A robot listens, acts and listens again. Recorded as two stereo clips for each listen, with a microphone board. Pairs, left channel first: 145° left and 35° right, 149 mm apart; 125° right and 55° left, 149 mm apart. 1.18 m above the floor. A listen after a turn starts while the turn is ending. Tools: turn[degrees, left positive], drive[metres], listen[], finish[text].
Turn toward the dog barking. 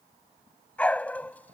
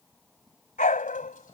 Thought: The dog barking: 135° right.
Action: turn[-135]
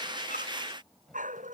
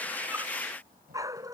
Thought: The dog barking is now 10° right.
Action: turn[-10]
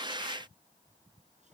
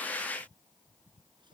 Action: listen[]
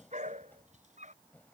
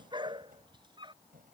Action: finish[Facing the dog barking.]